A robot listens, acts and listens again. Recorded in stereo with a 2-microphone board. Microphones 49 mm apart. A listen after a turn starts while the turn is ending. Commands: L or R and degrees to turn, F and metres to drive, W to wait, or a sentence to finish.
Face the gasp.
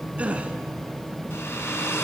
R30
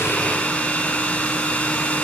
W
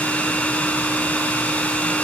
I heard a gasp, but can't make it out now. It was about straight ahead or 120° right.